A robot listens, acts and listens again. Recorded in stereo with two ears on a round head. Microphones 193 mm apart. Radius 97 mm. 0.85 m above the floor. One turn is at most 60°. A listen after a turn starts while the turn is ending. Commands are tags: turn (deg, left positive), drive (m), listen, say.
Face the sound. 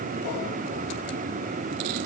<listen/>
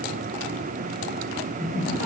<turn deg="40"/>
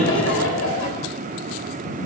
<turn deg="60"/>
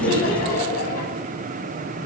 <turn deg="45"/>
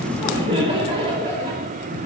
<turn deg="-25"/>
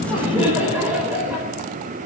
<say>Found it: laughter, straight ahead, over 4 m away.</say>